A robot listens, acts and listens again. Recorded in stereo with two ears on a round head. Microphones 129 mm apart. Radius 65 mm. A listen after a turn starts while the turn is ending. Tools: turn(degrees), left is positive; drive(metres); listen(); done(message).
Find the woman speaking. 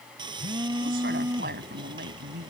turn(degrees=-65)
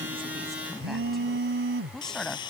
done("Facing the woman speaking.")